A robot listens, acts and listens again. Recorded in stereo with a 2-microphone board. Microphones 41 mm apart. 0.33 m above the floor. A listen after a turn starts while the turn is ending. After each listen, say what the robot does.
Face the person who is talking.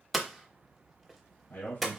Turn 60° left.
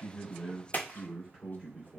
Turn 20° left.
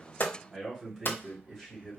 Found it: a man speaking, straight ahead.